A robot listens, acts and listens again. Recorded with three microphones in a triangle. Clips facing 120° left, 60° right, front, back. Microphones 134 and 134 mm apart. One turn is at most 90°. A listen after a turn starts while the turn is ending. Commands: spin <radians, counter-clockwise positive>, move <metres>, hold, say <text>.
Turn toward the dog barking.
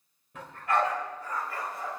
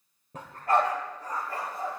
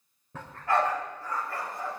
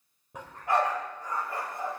spin -1.57
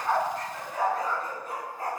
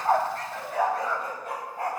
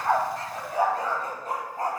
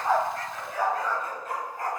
spin -1.05
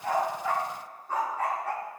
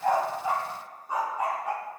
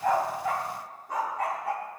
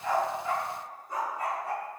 spin 0.26
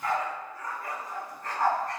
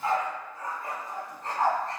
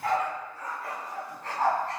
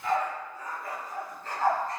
say Found it: a dog barking, straight ahead, over 4 m away.